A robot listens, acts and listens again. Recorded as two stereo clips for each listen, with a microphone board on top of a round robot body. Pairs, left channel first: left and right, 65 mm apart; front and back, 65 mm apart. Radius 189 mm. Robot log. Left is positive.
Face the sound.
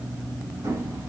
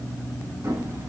note: The hammering: 140° right.
cmd yaw -140
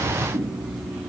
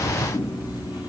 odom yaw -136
end: Facing the hammering, over 4 m away.